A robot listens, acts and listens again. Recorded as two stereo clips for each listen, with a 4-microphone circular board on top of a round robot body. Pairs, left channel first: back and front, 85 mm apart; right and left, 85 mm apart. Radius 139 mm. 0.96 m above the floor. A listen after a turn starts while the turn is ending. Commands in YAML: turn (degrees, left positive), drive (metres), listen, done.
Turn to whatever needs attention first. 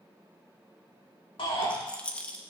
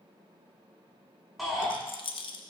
turn: 175
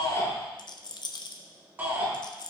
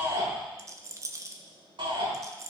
turn: 65
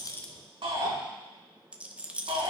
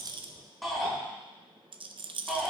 done: "Found it: a shout, straight ahead."